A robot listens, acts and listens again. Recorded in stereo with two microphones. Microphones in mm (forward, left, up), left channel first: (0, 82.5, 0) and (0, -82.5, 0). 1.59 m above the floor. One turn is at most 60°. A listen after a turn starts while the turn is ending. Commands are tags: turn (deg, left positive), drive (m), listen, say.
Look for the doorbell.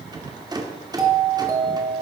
<turn deg="-20"/>
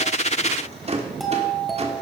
<say>Found it: a doorbell, straight ahead.</say>